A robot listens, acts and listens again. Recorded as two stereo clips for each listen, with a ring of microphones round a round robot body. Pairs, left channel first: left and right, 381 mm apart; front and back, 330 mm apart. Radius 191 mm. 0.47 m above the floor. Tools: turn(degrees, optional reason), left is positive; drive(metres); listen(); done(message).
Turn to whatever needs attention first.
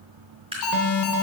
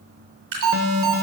turn(degrees=135, reason="The alarm: 135° left.")
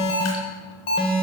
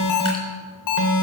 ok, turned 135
turn(degrees=15, reason="The alarm is now 15° left.")
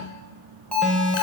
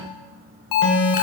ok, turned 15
done("Found it: an alarm, straight ahead, 1 to 2 m away.")